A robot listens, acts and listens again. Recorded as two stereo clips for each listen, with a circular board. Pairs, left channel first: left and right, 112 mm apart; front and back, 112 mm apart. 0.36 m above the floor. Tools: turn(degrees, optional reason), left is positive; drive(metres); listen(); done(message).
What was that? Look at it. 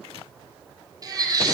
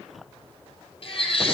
turn(degrees=-35, reason="The baby crying: 35° right.")
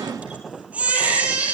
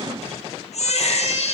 turn(degrees=-10, reason="The baby crying is now 10° right.")
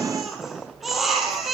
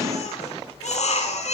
done("Found it: a baby crying, straight ahead, over 4 m away.")